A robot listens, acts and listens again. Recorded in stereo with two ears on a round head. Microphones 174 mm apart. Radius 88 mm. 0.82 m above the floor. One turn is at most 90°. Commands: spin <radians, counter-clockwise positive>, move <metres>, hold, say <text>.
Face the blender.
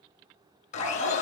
spin 0.61
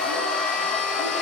say Found it: a blender, straight ahead, over 4 m away.